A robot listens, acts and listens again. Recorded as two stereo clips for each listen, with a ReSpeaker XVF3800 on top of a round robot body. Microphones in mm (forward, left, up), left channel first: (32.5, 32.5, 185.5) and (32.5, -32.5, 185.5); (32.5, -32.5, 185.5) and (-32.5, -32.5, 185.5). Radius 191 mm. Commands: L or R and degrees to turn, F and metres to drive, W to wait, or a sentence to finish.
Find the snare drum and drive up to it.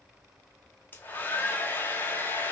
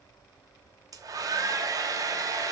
W
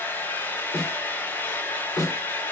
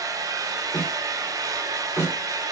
L55
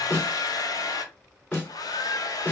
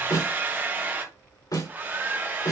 L20
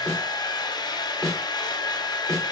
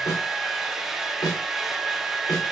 F1.0
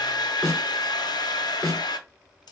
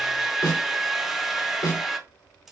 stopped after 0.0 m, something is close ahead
Something is in my way. I am facing the snare drum but have not reached it.